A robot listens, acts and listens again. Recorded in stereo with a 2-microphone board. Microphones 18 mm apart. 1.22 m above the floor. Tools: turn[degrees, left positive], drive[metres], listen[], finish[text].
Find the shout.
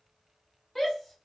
Thought: The shout: about 20° left or 160° left.
Action: turn[20]
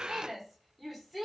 Action: finish[Facing the shout.]